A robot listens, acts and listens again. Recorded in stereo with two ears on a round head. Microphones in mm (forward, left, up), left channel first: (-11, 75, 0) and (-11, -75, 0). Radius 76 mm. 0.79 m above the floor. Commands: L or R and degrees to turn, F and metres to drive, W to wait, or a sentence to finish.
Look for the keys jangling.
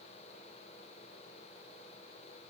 W
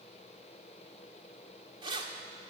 R30
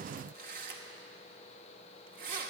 R115
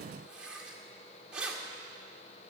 Facing the keys jangling.